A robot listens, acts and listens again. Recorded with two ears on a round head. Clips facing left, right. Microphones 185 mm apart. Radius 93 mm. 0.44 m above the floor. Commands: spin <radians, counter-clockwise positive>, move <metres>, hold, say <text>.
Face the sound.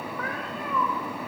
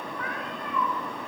spin 0.96
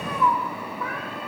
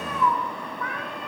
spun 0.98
say Facing the cat meowing, over 4 m away.